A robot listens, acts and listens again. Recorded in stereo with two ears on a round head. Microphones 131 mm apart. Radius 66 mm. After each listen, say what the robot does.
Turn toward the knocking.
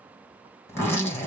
Keep listening.
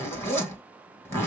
Keep listening.
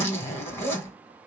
I can't make out knocking, only a zipper.